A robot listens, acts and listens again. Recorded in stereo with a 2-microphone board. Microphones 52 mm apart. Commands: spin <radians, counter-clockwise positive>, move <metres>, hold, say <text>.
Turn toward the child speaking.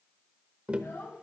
spin 0.87
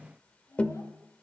spin 1.40
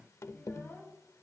spin 0.70
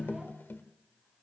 hold
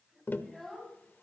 say Found it: a child speaking, straight ahead, over 4 m away.